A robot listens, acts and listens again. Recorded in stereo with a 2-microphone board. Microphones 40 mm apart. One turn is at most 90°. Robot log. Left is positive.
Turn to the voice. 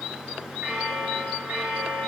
cmd idle
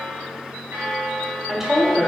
cmd yaw -30
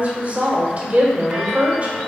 note: So it is at 135° right.
cmd yaw -90
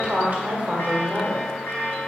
note: The woman speaking is now 50° right.
cmd yaw -50
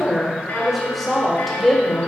end: Found it: a woman speaking, straight ahead, 1 to 2 m away.